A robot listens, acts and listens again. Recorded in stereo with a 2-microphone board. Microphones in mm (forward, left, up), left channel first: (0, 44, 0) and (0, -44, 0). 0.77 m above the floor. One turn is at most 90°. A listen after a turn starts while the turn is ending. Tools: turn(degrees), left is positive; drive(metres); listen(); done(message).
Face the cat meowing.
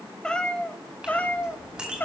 turn(degrees=25)
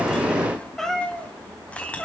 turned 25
turn(degrees=30)
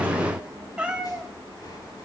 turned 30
turn(degrees=-10)
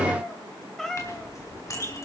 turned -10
turn(degrees=10)
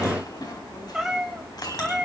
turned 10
done("Found it: a cat meowing, straight ahead.")